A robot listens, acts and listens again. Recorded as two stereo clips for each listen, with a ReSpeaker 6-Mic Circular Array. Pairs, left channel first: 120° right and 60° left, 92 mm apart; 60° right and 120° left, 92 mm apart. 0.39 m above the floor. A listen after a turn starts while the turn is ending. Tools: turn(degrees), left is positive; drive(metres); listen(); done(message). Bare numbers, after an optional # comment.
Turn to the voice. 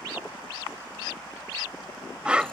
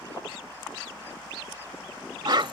listen()
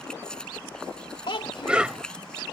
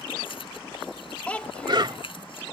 # The child speaking: 135° right.
turn(-135)
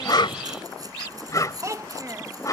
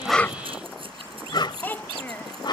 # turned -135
# The child speaking is now 10° left.
turn(10)
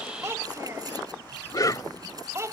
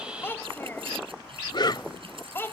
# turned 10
done("Found it: a child speaking, straight ahead.")